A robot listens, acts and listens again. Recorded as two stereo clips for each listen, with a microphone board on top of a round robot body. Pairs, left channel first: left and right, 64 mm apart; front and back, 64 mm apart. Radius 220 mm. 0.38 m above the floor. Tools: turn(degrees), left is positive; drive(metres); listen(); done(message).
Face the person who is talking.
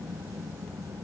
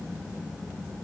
listen()
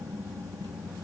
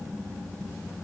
listen()
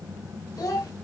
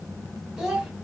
turn(degrees=100)
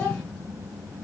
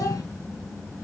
listen()
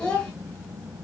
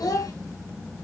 turn(degrees=15)
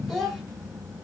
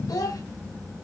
done("Found it: a child speaking, straight ahead, 2 to 4 m away.")